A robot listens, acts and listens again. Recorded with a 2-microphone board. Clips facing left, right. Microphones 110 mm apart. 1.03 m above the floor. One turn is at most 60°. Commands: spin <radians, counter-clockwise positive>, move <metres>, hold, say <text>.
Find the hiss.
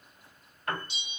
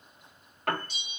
hold
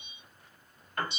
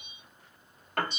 hold
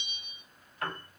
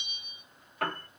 say I can't make out a hiss, only a bell and a piano.